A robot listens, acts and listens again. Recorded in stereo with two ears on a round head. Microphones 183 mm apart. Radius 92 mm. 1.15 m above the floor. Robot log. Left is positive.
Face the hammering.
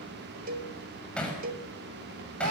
cmd yaw +30
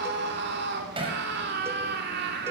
note: So it is at 25° right.
cmd yaw -25
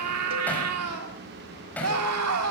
end: Found it: hammering, straight ahead.